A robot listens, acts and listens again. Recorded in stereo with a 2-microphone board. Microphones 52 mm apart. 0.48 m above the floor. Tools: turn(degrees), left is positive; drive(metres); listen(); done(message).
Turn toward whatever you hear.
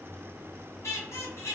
turn(degrees=70)
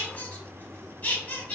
turn(degrees=35)
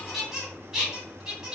turn(degrees=-10)
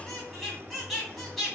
done("Found it: a squeak, straight ahead, 1 to 2 m away.")